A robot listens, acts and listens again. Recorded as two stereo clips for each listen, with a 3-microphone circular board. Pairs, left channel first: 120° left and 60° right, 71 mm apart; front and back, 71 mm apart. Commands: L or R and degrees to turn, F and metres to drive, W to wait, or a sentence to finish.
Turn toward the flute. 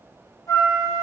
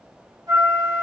L155
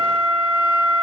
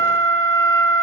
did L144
L15
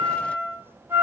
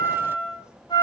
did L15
Found it: a flute, straight ahead, 2 to 4 m away.